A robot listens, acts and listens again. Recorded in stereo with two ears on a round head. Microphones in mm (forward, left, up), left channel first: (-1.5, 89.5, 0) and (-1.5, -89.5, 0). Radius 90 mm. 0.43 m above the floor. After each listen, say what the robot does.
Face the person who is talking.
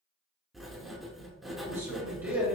Turn 30° right.
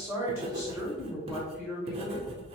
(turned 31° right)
Turn 30° left.
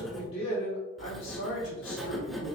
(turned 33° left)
Turn 130° left.
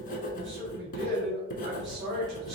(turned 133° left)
Turn 20° right.
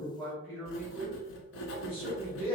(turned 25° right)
Found it: a man speaking, straight ahead.